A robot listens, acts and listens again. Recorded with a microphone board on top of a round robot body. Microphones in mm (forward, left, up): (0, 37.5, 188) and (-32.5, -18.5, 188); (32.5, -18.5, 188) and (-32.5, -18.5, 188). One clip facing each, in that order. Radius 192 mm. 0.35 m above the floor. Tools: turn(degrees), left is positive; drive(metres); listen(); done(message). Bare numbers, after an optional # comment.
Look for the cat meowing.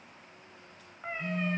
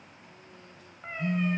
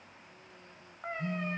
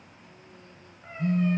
# The cat meowing: 20° right.
turn(-20)
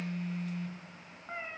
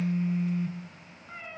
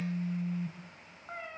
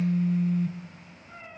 done("Facing the cat meowing, 1 to 2 m away.")